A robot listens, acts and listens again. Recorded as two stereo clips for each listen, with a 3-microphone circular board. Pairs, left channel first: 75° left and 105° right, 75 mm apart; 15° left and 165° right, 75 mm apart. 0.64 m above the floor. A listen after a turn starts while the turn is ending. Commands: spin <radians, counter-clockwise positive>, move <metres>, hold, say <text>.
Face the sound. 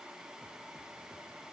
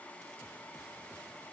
hold
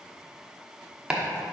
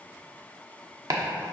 spin 3.14
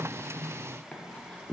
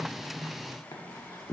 say Facing the chopping.